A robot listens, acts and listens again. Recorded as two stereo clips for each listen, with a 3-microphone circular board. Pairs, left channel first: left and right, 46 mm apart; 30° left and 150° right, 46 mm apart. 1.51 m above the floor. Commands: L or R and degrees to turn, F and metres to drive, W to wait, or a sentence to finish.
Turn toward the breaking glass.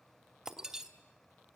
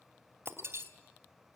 R165
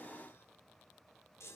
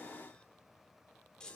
I heard breaking glass from this way, but can't make it out now.